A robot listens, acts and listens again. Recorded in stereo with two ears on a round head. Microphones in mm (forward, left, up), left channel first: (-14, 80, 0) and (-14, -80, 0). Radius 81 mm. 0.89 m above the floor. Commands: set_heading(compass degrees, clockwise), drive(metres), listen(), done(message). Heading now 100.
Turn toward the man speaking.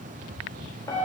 listen()
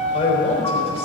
set_heading(65)
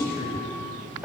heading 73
set_heading(318)
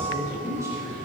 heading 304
set_heading(319)
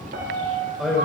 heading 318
done("Found it: a man speaking, straight ahead, over 4 m away.")